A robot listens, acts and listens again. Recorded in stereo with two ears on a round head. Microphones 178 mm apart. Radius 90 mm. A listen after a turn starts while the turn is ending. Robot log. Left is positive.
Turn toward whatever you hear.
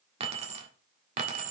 note: The keys jangling: about 40° right or 140° right.
cmd yaw -40
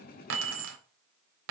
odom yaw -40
note: So it is at 100° right.
cmd yaw -100
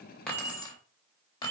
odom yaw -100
note: The keys jangling is now 25° left.
cmd yaw +25
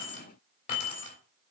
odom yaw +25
note: The keys jangling is now 35° left.
cmd yaw +35
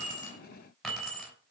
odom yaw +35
end: Facing the keys jangling, 2 to 4 m away.